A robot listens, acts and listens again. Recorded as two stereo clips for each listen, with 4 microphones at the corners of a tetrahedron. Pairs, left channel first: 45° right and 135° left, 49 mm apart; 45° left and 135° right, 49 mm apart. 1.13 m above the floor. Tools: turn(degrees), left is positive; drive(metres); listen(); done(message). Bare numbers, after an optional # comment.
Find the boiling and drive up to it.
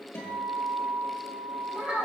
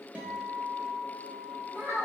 listen()
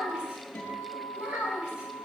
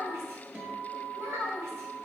listen()
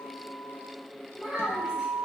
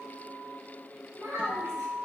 done("I can't make out boiling to turn to.")